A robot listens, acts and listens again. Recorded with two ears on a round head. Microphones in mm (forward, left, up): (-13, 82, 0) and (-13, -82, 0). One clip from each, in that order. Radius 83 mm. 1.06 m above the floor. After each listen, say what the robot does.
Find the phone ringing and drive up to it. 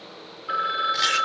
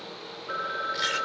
Turn 60° left.
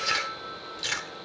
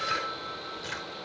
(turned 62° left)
Drive 1.0 m forward.
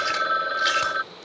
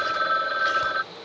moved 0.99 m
Drive 1.0 m forward.
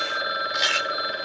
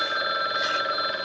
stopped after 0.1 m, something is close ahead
I am next to the phone ringing.